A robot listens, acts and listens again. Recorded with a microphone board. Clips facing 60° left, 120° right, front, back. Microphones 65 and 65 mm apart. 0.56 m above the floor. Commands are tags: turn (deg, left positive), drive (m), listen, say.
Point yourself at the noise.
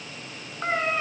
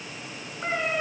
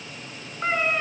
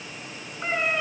<turn deg="80"/>
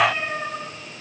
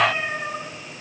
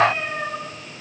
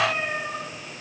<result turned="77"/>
<turn deg="-10"/>
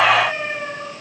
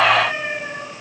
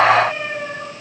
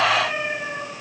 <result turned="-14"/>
<say>Found it: a cat meowing, straight ahead, over 4 m away.</say>